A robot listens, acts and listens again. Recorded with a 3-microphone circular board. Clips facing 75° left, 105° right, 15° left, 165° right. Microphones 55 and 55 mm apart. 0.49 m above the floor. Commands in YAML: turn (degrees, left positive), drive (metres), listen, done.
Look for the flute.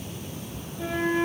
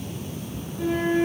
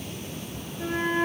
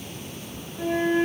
turn: 180
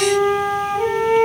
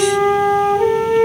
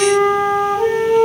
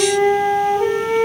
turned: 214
turn: -35
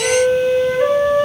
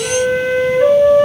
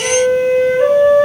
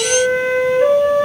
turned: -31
done: "Found it: a flute, straight ahead."